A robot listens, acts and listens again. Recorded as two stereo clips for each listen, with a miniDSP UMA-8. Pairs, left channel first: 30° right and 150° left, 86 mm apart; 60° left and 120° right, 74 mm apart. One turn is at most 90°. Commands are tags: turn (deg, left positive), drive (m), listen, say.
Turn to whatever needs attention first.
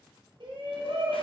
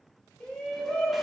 <turn deg="90"/>
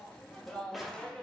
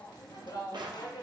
<turn deg="50"/>
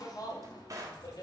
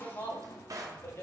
<turn deg="10"/>
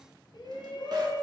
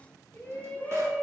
<say>Facing the shout, 1 to 2 m away.</say>